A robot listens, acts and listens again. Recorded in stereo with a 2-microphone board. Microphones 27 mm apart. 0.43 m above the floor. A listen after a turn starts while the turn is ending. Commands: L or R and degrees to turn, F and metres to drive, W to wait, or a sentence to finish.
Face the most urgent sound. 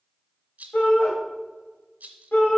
L65
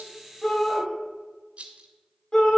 L25
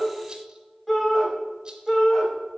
Found it: a shout, straight ahead, 2 to 4 m away.